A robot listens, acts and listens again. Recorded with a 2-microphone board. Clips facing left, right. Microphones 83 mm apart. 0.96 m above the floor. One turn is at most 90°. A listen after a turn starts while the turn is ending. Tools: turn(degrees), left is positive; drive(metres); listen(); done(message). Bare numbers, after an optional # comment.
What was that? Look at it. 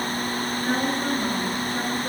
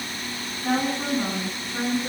# The woman speaking: about 65° right or 115° right.
turn(-65)
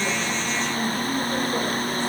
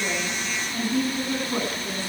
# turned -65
# So it is at 55° right.
turn(-55)
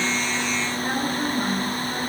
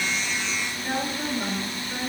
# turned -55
# The woman speaking is now 20° left.
turn(20)
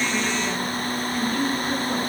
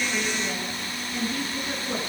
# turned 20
done("Facing the woman speaking, over 4 m away.")